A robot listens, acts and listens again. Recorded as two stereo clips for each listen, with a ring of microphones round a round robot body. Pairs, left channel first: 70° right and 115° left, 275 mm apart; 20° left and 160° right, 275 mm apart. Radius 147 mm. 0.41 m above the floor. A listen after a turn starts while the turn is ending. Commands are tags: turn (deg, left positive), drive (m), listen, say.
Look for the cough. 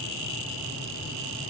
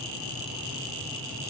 <listen/>
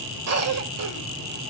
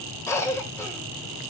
<turn deg="100"/>
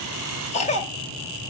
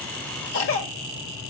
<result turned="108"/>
<say>Facing the cough, 1 to 2 m away.</say>